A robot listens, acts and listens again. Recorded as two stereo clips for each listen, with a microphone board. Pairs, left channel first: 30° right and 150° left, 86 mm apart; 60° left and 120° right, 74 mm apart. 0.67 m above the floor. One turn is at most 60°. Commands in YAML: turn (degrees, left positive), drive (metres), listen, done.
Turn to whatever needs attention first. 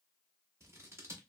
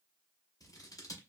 listen: true
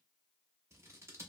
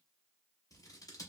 listen: true
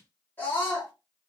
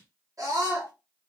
turn: -60
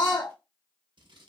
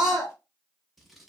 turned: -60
turn: -35
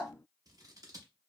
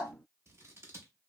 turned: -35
done: "Facing the scream."